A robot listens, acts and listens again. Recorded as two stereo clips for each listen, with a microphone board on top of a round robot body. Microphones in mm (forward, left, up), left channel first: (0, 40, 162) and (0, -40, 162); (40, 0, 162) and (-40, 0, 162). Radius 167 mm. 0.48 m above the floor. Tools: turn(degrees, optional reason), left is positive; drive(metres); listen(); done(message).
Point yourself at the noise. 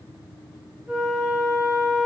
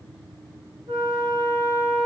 turn(degrees=-170, reason="The flute: 170° right.")
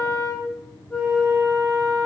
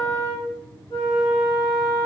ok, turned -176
done("Found it: a flute, straight ahead, 1 to 2 m away.")